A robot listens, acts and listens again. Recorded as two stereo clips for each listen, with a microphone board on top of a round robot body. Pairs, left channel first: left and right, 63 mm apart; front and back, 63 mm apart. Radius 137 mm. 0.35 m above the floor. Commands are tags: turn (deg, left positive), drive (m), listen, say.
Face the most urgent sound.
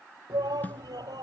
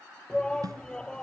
<turn deg="-80"/>
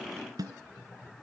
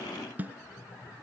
<turn deg="15"/>
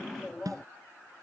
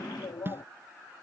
<say>Facing the shout.</say>